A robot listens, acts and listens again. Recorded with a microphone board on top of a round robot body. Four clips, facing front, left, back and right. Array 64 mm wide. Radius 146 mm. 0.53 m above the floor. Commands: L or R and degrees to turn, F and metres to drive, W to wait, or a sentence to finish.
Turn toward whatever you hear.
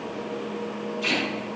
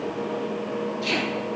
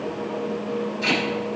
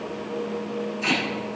R135
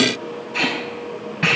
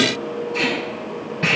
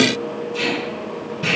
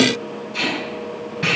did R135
Found it: tape being pulled, straight ahead.